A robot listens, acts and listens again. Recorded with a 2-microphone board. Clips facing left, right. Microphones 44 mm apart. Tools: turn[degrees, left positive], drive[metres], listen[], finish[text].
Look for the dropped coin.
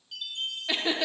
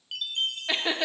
Action: listen[]
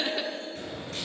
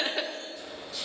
Thought: The dropped coin: about 55° left or 125° left.
Action: turn[55]
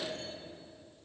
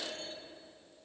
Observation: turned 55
Action: listen[]
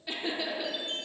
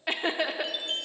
Action: finish[I heard a dropped coin, but can't make it out now. It was about straight ahead or 70° left.]